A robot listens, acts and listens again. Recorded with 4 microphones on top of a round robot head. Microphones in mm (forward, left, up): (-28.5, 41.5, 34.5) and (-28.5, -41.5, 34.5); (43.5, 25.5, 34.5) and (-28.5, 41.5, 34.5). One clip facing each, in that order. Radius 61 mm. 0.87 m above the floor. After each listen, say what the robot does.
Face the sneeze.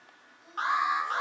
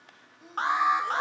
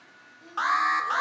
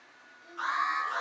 Turn 80° right.
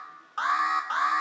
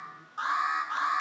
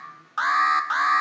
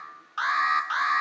Facing where the sneeze came from. I can't hear it now.